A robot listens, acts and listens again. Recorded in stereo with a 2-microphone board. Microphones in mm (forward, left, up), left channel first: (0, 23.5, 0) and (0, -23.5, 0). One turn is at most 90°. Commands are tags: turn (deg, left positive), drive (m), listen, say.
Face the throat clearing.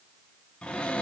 <listen/>
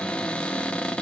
<listen/>
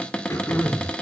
<turn deg="65"/>
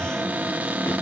<listen/>
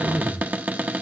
<turn deg="45"/>
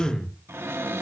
<turn deg="10"/>
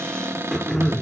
<say>Found it: throat clearing, straight ahead, 2 to 4 m away.</say>